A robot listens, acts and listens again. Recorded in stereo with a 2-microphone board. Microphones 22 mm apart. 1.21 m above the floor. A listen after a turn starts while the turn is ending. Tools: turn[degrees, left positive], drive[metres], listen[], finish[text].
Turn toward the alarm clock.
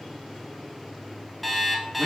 Action: turn[30]
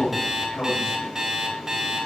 Thought: So it is at 30° right.
Action: turn[-30]
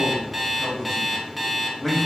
Action: finish[Found it: an alarm clock, straight ahead.]